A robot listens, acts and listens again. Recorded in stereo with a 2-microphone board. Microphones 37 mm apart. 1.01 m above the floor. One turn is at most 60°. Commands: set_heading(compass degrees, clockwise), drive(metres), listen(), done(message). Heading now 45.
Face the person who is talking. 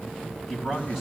set_heading(75)
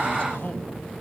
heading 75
set_heading(50)
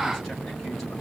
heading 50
listen()
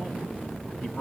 done("Facing the man speaking.")